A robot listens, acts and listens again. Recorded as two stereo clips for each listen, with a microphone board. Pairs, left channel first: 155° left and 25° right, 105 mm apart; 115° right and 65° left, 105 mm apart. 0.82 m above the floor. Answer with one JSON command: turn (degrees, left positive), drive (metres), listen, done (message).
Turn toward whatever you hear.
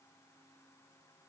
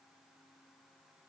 {"listen": true}
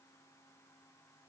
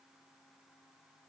{"listen": true}
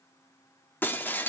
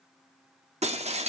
{"turn": 85}
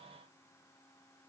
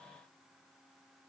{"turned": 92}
{"turn": -10}
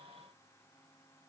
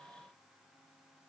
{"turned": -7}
{"done": "Facing where the breaking glass came from. I can't hear it now."}